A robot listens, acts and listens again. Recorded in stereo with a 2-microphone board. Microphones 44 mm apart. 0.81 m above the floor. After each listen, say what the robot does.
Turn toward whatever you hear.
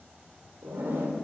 Turn 55° right.
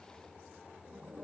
Turn 65° right.
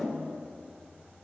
Turn 10° left.
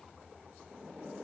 Found it: a zipper, straight ahead.